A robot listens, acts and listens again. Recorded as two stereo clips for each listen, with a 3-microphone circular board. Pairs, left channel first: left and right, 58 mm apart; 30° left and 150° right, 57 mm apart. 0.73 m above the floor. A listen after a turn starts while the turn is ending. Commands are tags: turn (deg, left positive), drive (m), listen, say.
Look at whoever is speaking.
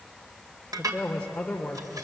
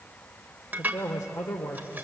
<turn deg="20"/>
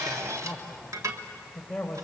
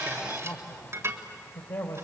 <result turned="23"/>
<say>Found it: a man speaking, straight ahead, 2 to 4 m away.</say>